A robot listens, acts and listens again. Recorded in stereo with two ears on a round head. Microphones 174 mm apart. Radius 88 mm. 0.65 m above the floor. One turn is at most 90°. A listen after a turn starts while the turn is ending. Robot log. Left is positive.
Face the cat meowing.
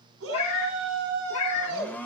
cmd yaw +90
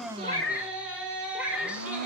end: Found it: a cat meowing, straight ahead, 2 to 4 m away.